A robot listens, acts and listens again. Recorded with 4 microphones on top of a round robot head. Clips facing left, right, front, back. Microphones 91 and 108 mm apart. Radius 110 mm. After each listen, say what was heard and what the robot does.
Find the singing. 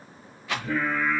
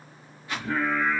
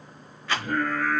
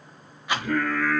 The singing: 170° right. Turn 170° right.
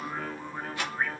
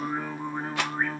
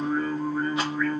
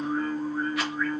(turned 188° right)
The singing is now 30° right. Turn 30° right.
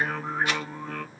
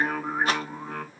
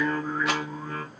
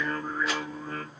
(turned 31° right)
The singing is now 20° right. Turn 20° right.
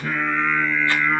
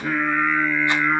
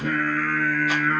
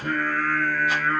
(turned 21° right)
The singing is now 15° right. Turn 15° right.
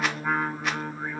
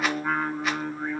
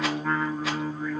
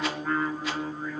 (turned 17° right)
Found it: singing, straight ahead.